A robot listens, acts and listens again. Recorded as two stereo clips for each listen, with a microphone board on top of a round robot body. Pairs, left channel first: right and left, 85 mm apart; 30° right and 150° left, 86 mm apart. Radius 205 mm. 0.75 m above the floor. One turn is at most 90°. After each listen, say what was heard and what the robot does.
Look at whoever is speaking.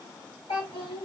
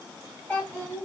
The child speaking: 100° right. Turn 90° right.
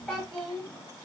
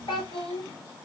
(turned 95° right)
Facing the child speaking, 1 to 2 m away.